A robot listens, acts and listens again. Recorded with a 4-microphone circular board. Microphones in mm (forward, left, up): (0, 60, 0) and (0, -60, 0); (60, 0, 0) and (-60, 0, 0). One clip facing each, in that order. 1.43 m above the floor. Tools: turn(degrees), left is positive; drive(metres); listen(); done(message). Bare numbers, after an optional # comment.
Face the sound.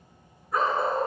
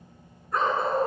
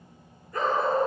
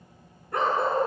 # The dog barking: 175° left.
turn(175)
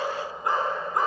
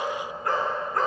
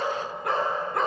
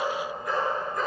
# The dog barking is now 15° left.
turn(15)
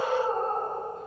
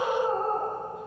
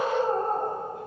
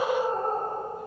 done("Facing the dog barking, over 4 m away.")